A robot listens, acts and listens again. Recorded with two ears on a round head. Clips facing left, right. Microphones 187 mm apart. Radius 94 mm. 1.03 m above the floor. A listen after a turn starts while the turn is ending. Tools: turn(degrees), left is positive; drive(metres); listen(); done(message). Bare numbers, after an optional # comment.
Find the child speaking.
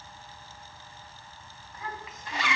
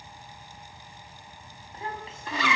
# The child speaking: about 25° right or 155° right.
turn(-25)
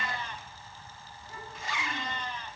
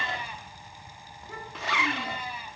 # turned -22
# So it is at 125° right.
turn(-125)
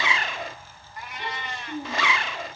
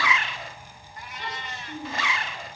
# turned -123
# The child speaking is now 15° left.
turn(15)
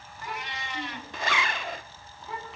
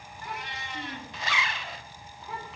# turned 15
done("Found it: a child speaking, straight ahead, over 4 m away.")